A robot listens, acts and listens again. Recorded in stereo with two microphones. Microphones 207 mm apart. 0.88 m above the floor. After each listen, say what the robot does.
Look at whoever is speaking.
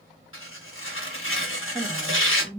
Turn 25° left.
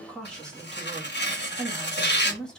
Facing the woman speaking, 1 to 2 m away.